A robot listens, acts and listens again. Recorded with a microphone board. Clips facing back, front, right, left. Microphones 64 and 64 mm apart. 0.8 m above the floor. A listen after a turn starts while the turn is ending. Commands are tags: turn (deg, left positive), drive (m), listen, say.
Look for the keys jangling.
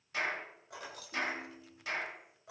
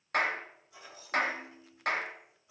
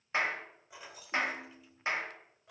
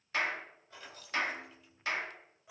<turn deg="175"/>
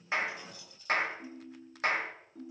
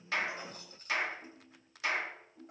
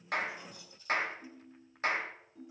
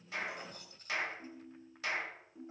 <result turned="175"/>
<turn deg="50"/>
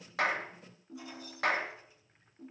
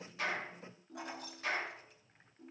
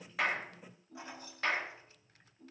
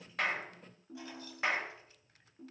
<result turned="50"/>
<turn deg="-25"/>
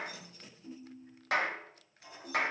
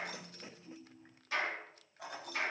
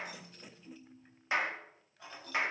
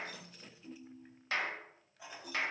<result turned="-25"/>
<turn deg="10"/>
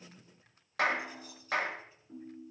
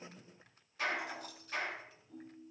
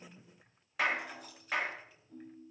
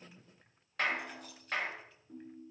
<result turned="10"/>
<say>Found it: keys jangling, straight ahead, over 4 m away.</say>